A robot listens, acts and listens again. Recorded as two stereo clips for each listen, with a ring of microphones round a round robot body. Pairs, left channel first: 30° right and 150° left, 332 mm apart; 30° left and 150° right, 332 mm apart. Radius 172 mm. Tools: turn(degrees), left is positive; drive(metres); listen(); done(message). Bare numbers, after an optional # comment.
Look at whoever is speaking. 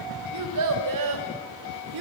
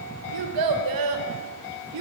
# The child speaking: 170° left.
turn(170)
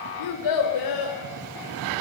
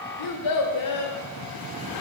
done("Facing the child speaking, 2 to 4 m away.")